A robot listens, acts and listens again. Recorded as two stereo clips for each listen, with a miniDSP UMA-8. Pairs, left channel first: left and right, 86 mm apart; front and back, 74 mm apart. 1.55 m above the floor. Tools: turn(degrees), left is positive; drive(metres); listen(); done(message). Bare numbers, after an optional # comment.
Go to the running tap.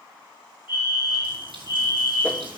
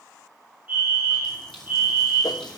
# The running tap: 80° right.
turn(-80)
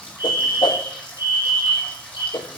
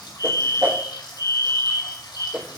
# The running tap is now 15° left.
turn(15)
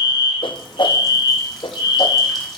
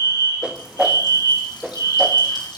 listen()
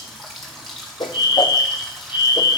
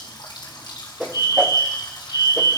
drive(1.0)
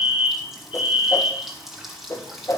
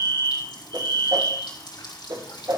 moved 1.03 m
drive(1.0)
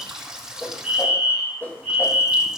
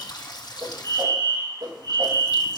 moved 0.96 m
# The running tap is now 10° right.
turn(-10)
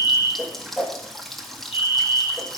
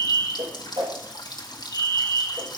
drive(1.0)
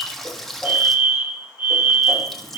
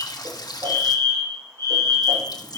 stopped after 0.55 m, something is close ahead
done("I am next to the running tap.")